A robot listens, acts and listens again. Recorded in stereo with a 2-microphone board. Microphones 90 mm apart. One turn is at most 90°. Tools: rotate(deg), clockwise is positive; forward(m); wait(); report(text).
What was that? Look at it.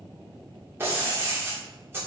rotate(30)
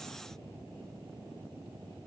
wait()
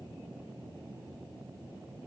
report("I heard breaking glass, but can't make it out now. It was about straight ahead or 120° right.")